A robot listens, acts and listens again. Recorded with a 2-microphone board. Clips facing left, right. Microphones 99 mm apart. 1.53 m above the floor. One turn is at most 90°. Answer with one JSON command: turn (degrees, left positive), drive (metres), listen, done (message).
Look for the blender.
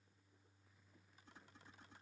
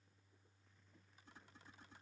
{"listen": true}
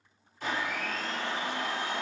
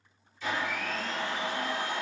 {"turn": 60}
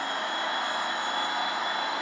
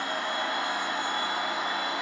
{"turn": 50}
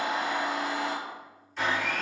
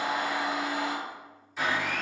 {"done": "Found it: a blender, straight ahead."}